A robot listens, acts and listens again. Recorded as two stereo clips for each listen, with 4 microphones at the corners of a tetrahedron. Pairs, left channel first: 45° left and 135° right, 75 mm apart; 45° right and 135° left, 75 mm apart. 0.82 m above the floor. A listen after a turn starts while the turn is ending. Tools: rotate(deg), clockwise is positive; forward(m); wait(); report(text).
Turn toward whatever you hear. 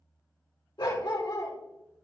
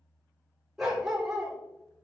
rotate(-50)
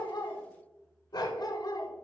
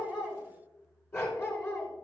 rotate(-15)
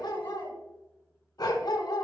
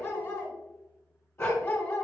rotate(-15)
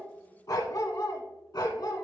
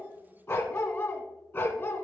rotate(-10)
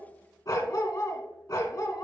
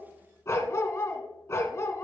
report("Found it: a dog barking, straight ahead.")